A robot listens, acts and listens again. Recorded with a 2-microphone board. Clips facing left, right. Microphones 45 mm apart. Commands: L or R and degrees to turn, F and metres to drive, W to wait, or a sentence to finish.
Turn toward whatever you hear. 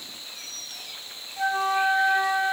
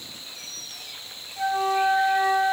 L30
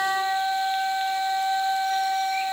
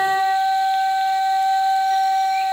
R20
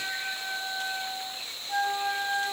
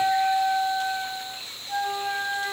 R10
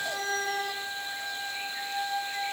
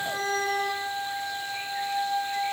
Facing the flute, under 1 m away.